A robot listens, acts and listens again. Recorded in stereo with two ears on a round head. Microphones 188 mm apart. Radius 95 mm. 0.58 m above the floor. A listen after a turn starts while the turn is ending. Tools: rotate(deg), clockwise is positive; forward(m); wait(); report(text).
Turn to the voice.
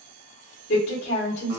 rotate(-55)
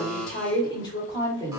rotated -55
rotate(-25)
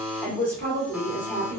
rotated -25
rotate(-10)
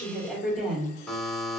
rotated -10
report("Found it: a woman speaking, straight ahead, 1 to 2 m away.")